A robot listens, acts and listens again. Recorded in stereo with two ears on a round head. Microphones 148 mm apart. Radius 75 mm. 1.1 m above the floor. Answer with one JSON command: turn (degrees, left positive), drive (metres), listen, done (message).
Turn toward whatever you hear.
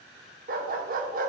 {"turn": -55}
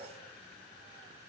{"listen": true}
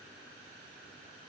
{"listen": true}
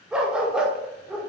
{"done": "Found it: a dog barking, straight ahead."}